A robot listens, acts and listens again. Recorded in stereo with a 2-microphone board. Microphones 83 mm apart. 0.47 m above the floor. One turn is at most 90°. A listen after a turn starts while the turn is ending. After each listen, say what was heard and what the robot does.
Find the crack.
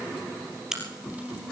Turn 30° right.
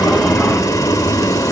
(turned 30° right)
Keep listening.
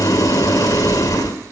I heard a crack, but can't make it out now. It was about 25° left or 145° right.